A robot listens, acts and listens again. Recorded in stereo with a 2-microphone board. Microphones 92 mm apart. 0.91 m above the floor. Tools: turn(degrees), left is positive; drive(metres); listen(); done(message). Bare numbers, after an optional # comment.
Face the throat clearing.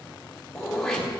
turn(30)
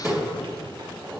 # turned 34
# So it is at 30° right.
turn(-30)
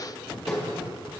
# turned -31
done("Found it: throat clearing, straight ahead.")